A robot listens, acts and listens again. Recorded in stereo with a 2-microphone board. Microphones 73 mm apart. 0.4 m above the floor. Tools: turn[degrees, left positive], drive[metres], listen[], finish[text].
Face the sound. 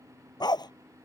Action: turn[90]
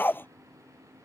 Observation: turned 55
Thought: So it is at 30° left.
Action: turn[30]
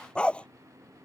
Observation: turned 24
Thought: The dog barking is now 15° left.
Action: turn[15]
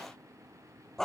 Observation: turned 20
Action: finish[Facing the dog barking.]